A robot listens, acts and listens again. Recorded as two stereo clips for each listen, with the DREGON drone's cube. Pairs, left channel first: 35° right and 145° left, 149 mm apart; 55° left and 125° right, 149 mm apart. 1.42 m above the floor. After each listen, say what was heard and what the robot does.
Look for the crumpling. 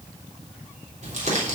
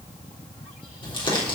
The crumpling: 110° left. Turn 110° left.
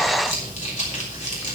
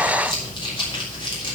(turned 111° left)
Facing the crumpling.